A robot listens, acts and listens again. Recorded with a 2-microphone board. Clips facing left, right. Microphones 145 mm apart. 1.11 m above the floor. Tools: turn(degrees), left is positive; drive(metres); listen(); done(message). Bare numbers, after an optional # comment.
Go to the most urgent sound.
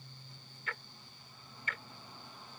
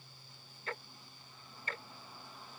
listen()
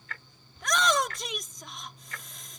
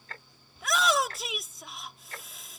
turn(-30)
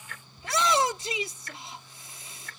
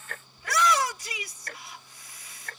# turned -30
# So it is at 25° left.
turn(25)
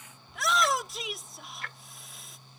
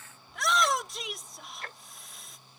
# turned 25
drive(1.0)
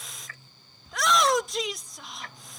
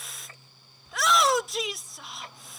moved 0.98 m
drive(1.0)
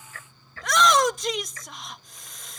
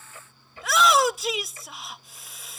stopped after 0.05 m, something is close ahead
done("I am next to the shout.")